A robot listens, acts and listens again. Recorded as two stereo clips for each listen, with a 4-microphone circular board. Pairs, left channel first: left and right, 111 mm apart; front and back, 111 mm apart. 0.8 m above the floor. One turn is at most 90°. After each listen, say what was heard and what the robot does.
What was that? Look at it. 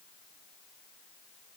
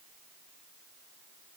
Keep listening.
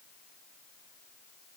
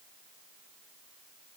Keep listening.
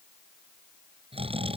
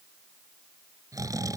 The snoring: 120° right. Turn 90° right.
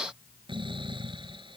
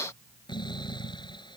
The snoring is now 50° right. Turn 50° right.
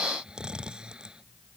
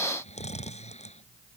The snoring is now 10° right. Turn 10° right.
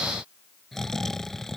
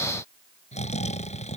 Found it: snoring, straight ahead.